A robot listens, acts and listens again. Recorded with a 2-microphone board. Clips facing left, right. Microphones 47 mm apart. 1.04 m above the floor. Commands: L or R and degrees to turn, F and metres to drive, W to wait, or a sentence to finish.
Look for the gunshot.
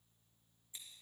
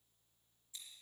W
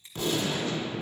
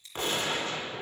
R45
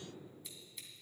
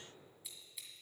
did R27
W
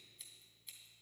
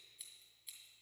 I heard a gunshot, but can't make it out now. It was about 15° right or 110° right.